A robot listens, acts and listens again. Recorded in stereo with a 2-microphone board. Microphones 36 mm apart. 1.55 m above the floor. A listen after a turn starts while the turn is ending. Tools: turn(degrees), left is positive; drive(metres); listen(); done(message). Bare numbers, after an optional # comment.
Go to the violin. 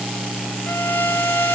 turn(90)
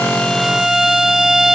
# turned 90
# So it is at 15° right.
turn(-15)
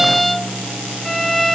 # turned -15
drive(1.0)
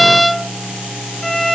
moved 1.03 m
drive(1.0)
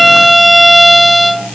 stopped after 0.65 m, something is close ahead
done("I am next to the violin.")